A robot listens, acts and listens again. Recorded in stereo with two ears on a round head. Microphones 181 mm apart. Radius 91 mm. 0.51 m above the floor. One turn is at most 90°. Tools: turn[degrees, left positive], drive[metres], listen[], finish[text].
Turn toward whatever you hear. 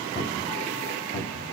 Thought: The cupboard door: about 25° left or 155° left.
Action: turn[25]
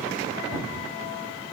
Action: finish[Facing the cupboard door, 1 to 2 m away.]